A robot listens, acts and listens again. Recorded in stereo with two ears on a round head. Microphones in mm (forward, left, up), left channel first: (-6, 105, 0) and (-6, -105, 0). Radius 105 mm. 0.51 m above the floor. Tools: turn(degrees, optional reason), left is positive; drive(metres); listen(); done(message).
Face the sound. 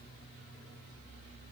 listen()
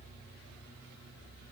listen()
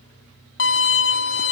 turn(degrees=50, reason="The violin: about 50° left or 130° left.")
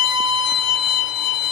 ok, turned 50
turn(degrees=80, reason="So it is at 80° left.")
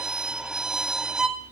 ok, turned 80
done("Found it: a violin, straight ahead.")